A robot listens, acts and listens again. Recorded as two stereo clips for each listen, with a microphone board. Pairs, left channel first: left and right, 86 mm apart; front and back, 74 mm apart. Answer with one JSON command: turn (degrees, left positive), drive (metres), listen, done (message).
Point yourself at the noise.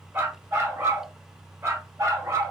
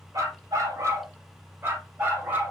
{"turn": -125}
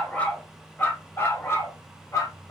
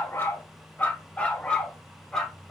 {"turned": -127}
{"turn": 85}
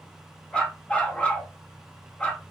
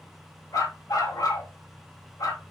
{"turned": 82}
{"turn": 20}
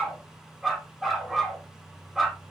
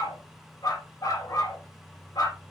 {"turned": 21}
{"done": "Found it: a dog barking, straight ahead."}